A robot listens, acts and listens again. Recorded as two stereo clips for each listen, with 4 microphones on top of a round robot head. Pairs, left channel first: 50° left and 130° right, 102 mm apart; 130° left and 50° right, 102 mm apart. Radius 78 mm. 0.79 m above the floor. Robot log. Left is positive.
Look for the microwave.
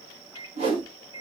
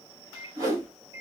end: Facing the microwave.